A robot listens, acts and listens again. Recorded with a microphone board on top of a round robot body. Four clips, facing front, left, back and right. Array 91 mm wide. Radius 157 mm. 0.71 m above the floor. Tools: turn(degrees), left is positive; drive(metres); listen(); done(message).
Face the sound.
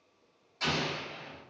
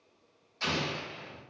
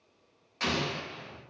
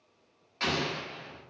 turn(degrees=-135)
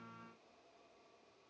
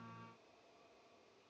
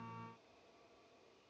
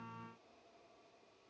done("I heard an explosion from this way, but can't make it out now.")